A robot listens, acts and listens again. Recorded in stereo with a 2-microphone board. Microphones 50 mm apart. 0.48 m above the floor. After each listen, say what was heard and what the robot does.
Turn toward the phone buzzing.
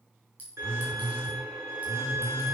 The phone buzzing: about 60° right or 120° right. Turn 60° right.
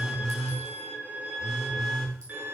Facing the phone buzzing, over 4 m away.